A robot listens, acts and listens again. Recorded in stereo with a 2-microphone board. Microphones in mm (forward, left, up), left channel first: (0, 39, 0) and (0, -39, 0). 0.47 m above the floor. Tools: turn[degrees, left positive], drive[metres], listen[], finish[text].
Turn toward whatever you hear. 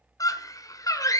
Thought: The scream: about 50° left or 130° left.
Action: turn[50]
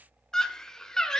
Thought: So it is at 10° left.
Action: turn[10]
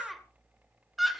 Action: finish[Facing the scream, 1 to 2 m away.]